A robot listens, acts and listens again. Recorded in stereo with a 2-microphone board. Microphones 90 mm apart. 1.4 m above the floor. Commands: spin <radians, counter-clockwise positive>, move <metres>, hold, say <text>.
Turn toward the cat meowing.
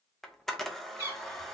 spin -0.52
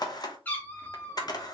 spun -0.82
spin 0.35
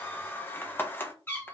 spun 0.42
spin 0.44
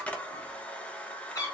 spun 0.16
spin 0.70
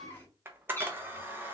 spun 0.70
spin 0.35
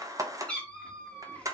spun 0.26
spin 0.17
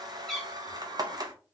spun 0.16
say Found it: a cat meowing, straight ahead.